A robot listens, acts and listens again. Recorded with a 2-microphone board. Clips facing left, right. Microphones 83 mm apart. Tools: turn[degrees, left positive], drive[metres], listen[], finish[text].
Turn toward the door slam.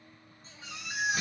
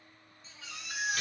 Thought: The door slam: about 20° left or 160° left.
Action: turn[20]
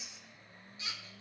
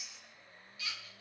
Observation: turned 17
Action: listen[]
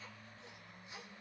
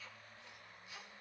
Action: finish[I heard a door slam, but can't make it out now. It was about straight ahead or 145° left.]